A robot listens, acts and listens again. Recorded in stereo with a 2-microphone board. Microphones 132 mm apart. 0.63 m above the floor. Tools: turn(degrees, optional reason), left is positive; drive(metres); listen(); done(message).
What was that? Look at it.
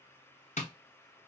turn(degrees=60, reason="The tapping: about 60° left or 120° left.")
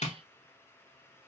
turn(degrees=60, reason="So it is at 60° left.")
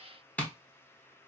turn(degrees=10, reason="The tapping is now 10° left.")
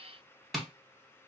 done("Facing the tapping, under 1 m away.")